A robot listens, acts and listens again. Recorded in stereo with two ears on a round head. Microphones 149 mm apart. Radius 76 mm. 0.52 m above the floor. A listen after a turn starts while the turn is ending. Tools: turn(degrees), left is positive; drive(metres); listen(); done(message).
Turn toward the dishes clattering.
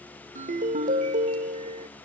listen()
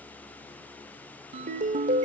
listen()
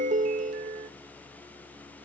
done("I can't make out dishes clattering, only a ringtone.")